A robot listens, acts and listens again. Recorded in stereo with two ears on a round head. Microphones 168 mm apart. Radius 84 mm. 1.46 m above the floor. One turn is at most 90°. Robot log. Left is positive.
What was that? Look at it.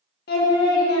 note: The singing: about 50° left or 130° left.
cmd yaw +50
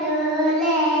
end: Found it: singing, straight ahead.